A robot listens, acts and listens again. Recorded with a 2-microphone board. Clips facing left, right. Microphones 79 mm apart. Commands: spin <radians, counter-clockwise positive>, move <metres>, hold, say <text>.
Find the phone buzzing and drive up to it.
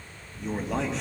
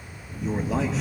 spin -0.87
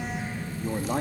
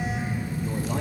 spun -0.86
move 1.0
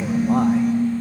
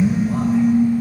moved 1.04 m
move 1.0
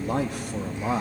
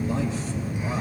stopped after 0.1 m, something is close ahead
spin -0.17
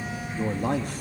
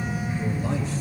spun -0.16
say Something is in my way. I am facing the phone buzzing but have not reached it.